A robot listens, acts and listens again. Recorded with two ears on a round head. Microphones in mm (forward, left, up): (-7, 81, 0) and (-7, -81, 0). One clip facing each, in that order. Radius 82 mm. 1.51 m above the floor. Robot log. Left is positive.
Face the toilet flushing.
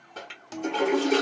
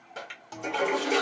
cmd yaw -30
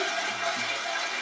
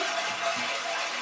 note: So it is at 135° right.
cmd yaw -135
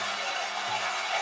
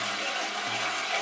note: The toilet flushing is now 40° right.
cmd yaw -40
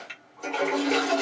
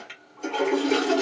end: Facing the toilet flushing.